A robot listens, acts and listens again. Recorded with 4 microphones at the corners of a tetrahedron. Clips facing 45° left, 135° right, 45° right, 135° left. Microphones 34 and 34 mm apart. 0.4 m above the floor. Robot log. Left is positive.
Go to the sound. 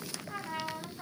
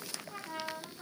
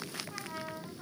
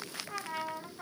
note: The trumpet: 100° left.
cmd yaw +100
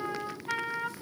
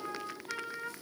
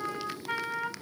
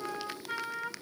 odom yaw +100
cmd fwd 1.0
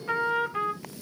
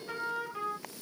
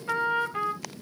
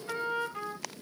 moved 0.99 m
cmd fwd 1.0
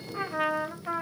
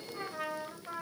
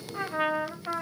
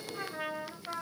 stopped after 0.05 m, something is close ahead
end: I am next to the trumpet.